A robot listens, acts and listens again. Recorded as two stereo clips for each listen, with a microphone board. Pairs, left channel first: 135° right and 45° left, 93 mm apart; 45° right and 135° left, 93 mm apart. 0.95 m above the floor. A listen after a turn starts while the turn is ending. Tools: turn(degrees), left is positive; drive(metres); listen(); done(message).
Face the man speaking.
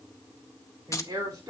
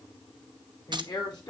done("Facing the man speaking, 2 to 4 m away.")